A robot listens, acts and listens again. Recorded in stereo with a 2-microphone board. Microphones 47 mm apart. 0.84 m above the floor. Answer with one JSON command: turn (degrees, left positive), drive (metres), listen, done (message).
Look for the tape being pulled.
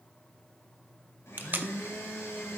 {"turn": -45}
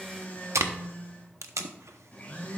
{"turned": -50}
{"turn": -85}
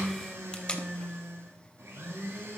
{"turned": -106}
{"turn": 20}
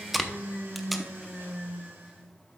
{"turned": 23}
{"done": "Facing the tape being pulled."}